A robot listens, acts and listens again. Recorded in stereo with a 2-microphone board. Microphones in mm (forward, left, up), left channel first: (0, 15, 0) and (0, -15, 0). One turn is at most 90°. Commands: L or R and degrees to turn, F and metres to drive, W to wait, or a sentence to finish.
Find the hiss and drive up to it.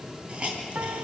R35
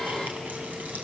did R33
W
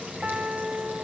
W
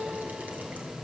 I heard a hiss, but can't make it out now. It was about straight ahead or 115° right. I did not reach it.